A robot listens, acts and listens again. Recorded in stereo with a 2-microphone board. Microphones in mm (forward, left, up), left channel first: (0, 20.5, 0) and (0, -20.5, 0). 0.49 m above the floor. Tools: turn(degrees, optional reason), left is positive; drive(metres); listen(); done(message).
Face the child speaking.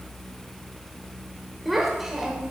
turn(degrees=-30)
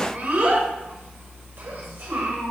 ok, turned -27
turn(degrees=-130, reason="So it is at 130° right.")
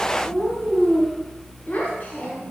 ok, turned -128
turn(degrees=35, reason="The child speaking is now 35° left.")
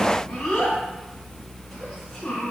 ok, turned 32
done("Found it: a child speaking, straight ahead.")